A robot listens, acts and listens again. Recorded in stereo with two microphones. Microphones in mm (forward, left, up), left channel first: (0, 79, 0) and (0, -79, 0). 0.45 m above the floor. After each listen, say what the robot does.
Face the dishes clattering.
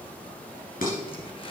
Turn 65° left.
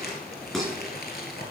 Facing the dishes clattering, 2 to 4 m away.